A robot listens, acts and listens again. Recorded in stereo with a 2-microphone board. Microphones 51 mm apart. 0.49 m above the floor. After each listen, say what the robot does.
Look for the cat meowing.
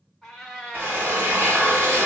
Turn 30° left.
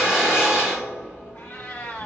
Turn 140° left.
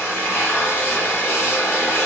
Keep listening.
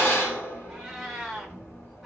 Turn 10° right.
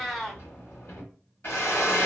Facing the cat meowing, under 1 m away.